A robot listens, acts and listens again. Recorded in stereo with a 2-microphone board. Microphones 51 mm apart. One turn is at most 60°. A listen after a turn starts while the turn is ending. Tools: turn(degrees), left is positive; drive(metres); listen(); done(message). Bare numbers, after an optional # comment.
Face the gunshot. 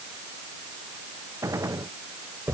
# The gunshot: about 70° right or 110° right.
turn(-60)
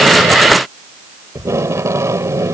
listen()
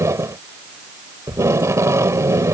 done("I heard a gunshot, but can't make it out now. It was about 10° right or 50° right.")